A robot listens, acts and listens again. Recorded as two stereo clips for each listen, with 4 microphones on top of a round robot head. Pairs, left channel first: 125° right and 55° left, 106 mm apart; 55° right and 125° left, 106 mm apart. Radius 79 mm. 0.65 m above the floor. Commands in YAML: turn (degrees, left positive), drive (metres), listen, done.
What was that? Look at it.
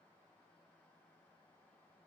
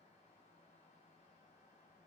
listen: true
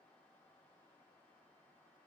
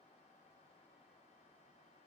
listen: true
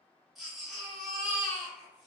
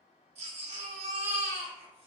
turn: 145
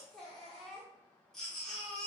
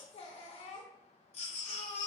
turn: -40
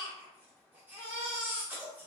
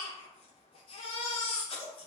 turn: -20
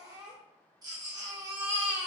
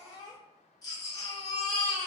done: "Facing the baby crying, under 1 m away."